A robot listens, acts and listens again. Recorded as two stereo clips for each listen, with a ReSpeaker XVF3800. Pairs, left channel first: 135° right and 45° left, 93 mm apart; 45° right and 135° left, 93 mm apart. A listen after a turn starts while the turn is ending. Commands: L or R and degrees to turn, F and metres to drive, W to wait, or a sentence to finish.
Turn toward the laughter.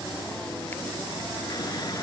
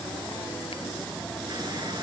W
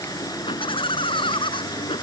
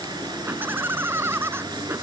R160
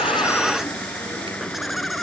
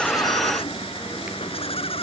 R45
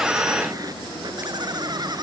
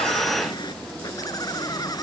Found it: laughter, straight ahead.